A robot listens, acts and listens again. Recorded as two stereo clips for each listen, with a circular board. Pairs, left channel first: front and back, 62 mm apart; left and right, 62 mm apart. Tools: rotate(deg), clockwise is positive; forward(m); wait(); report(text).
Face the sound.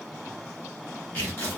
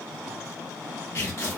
rotate(-60)
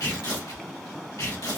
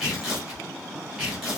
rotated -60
report("Found it: tearing paper, straight ahead, 1 to 2 m away.")